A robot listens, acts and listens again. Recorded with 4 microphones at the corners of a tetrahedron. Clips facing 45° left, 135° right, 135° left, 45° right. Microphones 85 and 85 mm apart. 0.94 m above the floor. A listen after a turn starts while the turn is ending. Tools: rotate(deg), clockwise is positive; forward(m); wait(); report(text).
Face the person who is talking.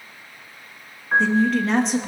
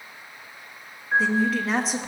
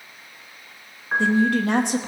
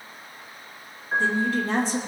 rotate(-140)
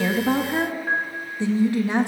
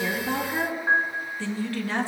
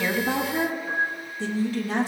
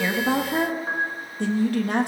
rotate(25)
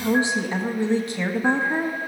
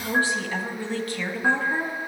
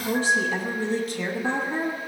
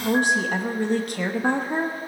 rotate(25)
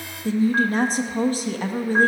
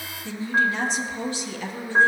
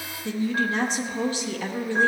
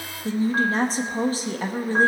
report("Found it: a woman speaking, straight ahead.")